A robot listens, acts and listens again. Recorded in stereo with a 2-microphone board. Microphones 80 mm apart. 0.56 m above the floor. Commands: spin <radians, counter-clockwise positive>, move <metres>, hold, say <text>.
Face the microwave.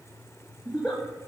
hold
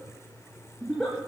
hold
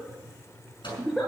spin 1.57
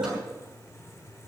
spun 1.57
hold
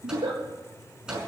spin -0.17
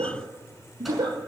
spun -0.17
hold
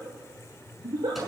hold
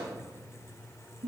say Facing where the microwave came from. I can't hear it now.